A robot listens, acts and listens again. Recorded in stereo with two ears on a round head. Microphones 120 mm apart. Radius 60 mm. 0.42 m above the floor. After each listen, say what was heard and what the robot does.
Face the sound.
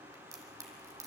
The crack: about 25° right or 155° right. Turn 25° right.
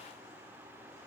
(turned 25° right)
Keep listening.
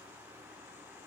I heard a crack, but can't make it out now. It was about straight ahead or 130° right.